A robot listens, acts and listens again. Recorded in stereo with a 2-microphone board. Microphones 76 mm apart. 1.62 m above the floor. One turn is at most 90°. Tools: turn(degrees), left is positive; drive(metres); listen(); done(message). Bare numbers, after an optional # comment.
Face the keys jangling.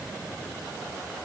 listen()
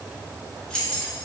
turn(30)
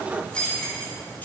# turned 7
# The keys jangling: about 20° left or 160° left.
turn(20)
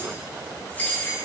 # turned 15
# The keys jangling: about 25° left or 155° left.
turn(25)
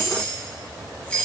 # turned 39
# The keys jangling: about 15° left or 165° left.
turn(15)
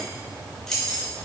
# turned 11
turn(30)
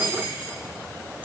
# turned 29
# So it is at 20° right.
turn(-20)
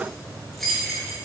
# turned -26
done("Found it: keys jangling, straight ahead, 1 to 2 m away.")